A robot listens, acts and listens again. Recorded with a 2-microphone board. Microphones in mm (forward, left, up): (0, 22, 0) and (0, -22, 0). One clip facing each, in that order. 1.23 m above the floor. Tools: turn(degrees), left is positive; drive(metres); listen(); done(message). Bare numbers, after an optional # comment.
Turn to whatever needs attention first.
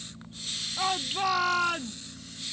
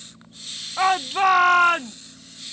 # The shout: about 50° right or 130° right.
turn(-50)
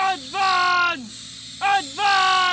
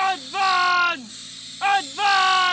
done("Facing the shout.")